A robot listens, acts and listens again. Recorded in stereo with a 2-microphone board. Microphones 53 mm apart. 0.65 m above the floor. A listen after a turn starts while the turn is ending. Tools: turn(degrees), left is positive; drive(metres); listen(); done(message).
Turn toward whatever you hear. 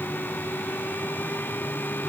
listen()
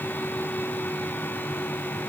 listen()
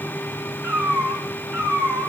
turn(degrees=-45)
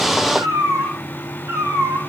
turn(degrees=-80)
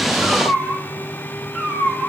turn(degrees=-20)
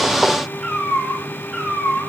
done("Facing the cat meowing, over 4 m away.")